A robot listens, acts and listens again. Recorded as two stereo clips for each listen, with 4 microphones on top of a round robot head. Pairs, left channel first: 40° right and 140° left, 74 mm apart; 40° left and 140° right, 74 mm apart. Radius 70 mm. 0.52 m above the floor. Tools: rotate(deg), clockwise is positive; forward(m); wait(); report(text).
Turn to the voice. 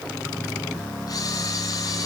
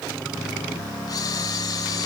wait()
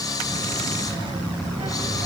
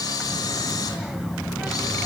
rotate(-140)
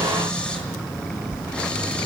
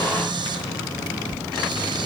rotate(-20)
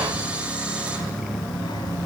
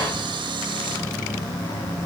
report("Facing the child speaking, 1 to 2 m away.")